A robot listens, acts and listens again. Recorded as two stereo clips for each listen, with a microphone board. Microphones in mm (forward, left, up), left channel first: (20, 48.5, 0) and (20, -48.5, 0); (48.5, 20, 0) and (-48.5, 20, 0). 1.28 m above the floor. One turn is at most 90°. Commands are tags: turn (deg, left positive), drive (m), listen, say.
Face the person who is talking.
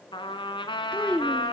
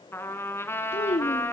<turn deg="15"/>
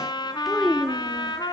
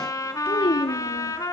<say>Facing the child speaking, 1 to 2 m away.</say>